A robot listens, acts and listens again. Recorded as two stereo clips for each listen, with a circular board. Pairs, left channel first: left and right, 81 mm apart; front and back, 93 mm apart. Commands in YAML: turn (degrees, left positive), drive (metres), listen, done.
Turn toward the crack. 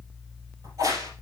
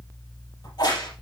turn: -40
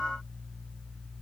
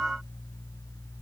done: "Facing where the crack came from. I can't hear it now."